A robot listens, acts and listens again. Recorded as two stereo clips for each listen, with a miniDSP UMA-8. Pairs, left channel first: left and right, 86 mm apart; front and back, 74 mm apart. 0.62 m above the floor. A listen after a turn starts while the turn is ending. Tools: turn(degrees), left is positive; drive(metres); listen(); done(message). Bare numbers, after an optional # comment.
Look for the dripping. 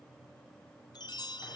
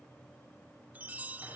listen()
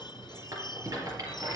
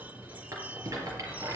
listen()
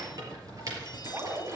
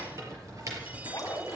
# The dripping: 35° right.
turn(-35)
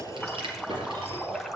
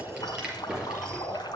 done("Facing the dripping.")